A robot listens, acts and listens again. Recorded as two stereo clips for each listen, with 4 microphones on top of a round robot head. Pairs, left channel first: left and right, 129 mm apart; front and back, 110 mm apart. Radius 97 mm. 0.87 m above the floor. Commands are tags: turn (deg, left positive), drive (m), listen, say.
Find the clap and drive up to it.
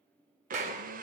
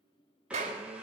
<turn deg="-130"/>
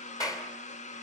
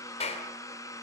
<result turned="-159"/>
<turn deg="30"/>
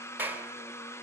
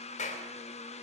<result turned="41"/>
<turn deg="-15"/>
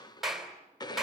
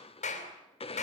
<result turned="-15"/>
<drive m="1.0"/>
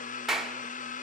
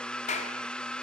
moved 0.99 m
<drive m="1.0"/>
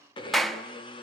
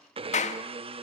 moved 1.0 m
<drive m="1.0"/>
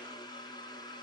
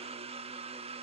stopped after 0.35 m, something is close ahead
<listen/>
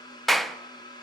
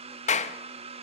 <say>I am next to the clap.</say>